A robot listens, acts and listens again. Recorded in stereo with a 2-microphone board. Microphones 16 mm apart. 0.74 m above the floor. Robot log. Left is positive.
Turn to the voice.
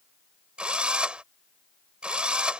cmd idle
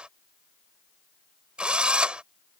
cmd idle
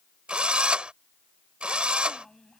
note: The child speaking: about 30° left or 150° left.
cmd yaw +30
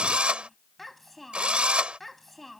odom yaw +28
end: Found it: a child speaking, straight ahead.